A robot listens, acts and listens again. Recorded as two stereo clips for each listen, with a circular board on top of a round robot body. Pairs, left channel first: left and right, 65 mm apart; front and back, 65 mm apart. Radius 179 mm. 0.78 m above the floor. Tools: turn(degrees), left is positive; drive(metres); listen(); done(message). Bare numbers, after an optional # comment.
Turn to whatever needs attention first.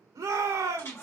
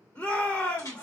# The shout: 65° right.
turn(-65)
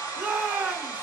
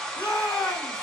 # The shout is now 25° right.
turn(-25)
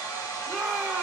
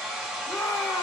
done("Found it: a shout, straight ahead.")